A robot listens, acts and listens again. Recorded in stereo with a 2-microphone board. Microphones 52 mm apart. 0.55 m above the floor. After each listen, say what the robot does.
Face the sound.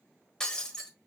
Turn 30° left.
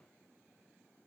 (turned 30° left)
Keep listening.
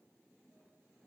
I heard breaking glass, but can't make it out now. It was about 20° right or 140° left.